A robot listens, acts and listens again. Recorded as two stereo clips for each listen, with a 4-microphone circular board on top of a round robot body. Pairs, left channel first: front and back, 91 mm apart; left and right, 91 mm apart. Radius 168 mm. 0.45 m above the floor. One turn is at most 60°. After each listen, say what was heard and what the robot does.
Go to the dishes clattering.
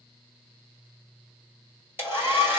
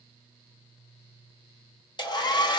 Keep listening.
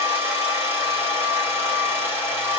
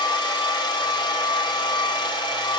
Keep listening.
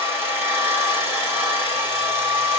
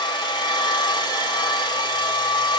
I can't make out dishes clattering, only a hair dryer.